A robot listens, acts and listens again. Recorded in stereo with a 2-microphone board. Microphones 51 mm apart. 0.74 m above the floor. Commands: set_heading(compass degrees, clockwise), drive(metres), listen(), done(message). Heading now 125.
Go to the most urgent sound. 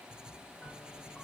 listen()
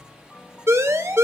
set_heading(190)
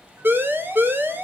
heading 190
set_heading(235)
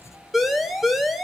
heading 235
drive(1.0)
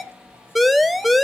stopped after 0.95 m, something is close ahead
done("Arrived at the siren, straight ahead.")